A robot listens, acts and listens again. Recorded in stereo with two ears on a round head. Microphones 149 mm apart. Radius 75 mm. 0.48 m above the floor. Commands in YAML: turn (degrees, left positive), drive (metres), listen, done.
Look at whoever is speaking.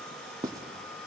listen: true
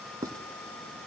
listen: true
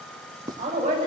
turn: -35
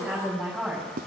done: "Found it: a woman speaking, straight ahead."